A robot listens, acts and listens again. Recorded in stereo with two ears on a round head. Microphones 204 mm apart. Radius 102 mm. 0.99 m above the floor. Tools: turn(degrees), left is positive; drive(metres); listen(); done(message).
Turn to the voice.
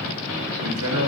turn(degrees=-75)
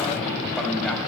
done("Found it: a man speaking, straight ahead, 1 to 2 m away.")